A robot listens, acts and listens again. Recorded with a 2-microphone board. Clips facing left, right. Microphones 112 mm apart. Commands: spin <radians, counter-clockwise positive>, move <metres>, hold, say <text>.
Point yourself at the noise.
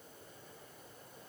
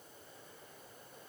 hold
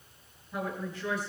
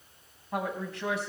spin -1.57
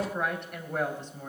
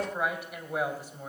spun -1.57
spin -0.17
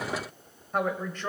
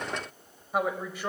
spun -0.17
spin -0.17
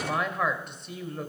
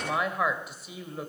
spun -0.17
say Facing the woman speaking, 2 to 4 m away.